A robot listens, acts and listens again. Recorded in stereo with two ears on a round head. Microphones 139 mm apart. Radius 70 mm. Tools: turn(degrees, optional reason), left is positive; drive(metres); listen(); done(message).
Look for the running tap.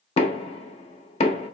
listen()
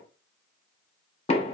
listen()
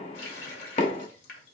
turn(degrees=90)
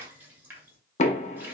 turn(degrees=-15, reason="So it is at 15° right.")
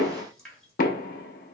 done("Found it: a running tap, straight ahead, 1 to 2 m away.")